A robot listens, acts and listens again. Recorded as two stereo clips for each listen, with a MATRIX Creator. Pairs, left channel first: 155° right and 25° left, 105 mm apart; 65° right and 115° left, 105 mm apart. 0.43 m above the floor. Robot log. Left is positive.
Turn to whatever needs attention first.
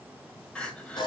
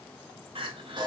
note: The crying: 125° left.
cmd yaw +125
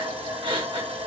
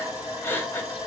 end: Facing the crying.